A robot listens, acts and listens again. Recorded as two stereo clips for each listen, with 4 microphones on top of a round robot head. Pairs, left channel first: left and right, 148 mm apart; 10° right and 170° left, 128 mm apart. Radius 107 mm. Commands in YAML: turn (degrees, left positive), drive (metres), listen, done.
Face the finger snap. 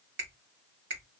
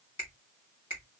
turn: -75
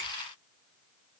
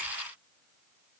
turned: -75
listen: true
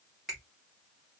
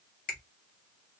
done: "Found it: a finger snap, straight ahead, 1 to 2 m away."